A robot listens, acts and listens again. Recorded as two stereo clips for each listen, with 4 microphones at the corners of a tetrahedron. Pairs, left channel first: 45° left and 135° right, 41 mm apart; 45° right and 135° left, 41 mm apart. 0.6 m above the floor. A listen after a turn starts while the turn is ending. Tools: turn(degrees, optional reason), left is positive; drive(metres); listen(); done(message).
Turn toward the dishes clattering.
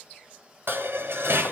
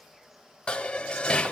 turn(degrees=-110, reason="The dishes clattering: 110° right.")
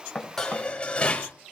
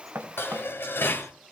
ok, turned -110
turn(degrees=-20, reason="The dishes clattering is now 20° right.")
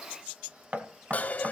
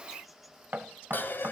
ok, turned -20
turn(degrees=-10, reason="The dishes clattering is now 10° right.")
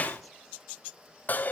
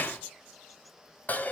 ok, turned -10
done("Found it: dishes clattering, straight ahead, 2 to 4 m away.")